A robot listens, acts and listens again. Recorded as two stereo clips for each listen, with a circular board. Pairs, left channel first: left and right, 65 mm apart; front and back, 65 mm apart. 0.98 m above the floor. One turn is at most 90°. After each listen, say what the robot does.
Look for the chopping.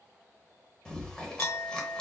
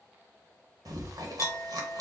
Keep listening.
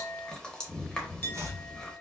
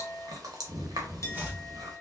Turn 90° right.
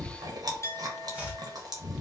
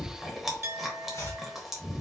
Turn 25° right.
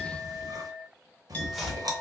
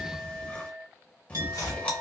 Found it: chopping, straight ahead.